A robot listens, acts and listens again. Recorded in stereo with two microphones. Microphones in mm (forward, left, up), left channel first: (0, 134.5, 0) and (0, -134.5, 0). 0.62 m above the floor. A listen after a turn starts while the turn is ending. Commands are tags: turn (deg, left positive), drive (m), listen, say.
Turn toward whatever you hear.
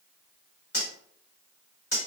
<turn deg="65"/>
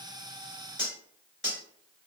<turn deg="45"/>
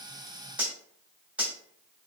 <say>Facing the cutlery clinking, 1 to 2 m away.</say>